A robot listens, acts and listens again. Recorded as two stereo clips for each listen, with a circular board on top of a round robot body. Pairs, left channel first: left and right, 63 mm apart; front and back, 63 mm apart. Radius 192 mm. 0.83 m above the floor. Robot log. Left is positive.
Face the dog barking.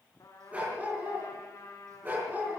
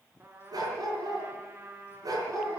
note: The dog barking: 150° right.
cmd yaw -150
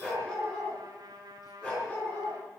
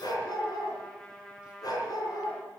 note: The dog barking is now 25° left.
cmd yaw +25
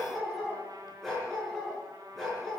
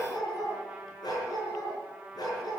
end: Facing the dog barking, over 4 m away.